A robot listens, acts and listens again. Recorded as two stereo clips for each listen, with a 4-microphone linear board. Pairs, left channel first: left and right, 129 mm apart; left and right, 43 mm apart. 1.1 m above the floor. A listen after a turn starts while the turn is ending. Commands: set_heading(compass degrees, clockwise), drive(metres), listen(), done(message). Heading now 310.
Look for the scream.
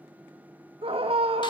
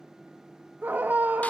set_heading(0)
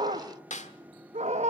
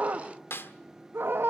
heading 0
set_heading(80)
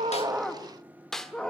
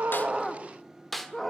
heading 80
done("Facing the scream.")